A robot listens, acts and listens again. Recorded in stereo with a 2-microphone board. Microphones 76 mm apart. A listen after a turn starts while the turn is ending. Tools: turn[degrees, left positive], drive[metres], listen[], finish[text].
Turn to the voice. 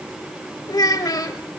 Thought: The child speaking: about 55° left or 125° left.
Action: turn[55]
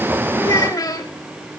Thought: So it is at 60° left.
Action: turn[60]
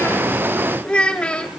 Thought: The child speaking is now 15° left.
Action: turn[15]
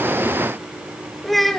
Action: finish[Found it: a child speaking, straight ahead.]